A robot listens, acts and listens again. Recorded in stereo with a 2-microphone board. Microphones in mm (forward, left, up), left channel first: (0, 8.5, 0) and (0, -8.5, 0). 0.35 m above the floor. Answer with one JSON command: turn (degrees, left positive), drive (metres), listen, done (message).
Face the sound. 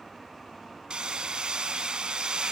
{"turn": -90}
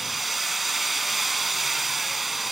{"done": "Facing the hammering."}